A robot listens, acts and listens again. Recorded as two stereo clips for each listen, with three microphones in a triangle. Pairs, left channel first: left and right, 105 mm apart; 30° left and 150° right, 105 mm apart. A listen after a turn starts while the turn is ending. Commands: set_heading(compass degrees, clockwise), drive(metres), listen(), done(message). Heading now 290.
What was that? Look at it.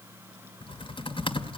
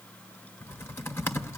set_heading(200)
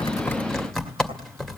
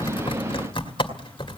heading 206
done("Found it: typing on a keyboard, straight ahead.")